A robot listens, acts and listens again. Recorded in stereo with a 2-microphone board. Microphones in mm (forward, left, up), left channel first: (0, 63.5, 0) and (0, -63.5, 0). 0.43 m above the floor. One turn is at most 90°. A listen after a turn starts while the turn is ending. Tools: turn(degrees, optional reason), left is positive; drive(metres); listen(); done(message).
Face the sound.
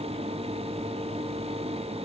listen()
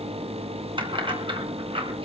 turn(degrees=-45, reason="The keys jangling: about 45° right or 135° right.")
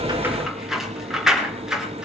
done("Facing the keys jangling, over 4 m away.")